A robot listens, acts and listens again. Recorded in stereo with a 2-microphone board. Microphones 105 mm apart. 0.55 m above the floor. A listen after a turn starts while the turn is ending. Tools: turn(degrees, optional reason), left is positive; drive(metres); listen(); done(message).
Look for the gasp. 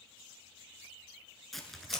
listen()
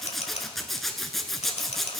listen()
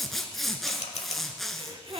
turn(degrees=-60, reason="The gasp: about 60° right or 120° right.")
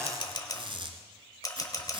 listen()
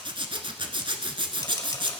done("I heard a gasp, but can't make it out now. It was about straight ahead or 60° right.")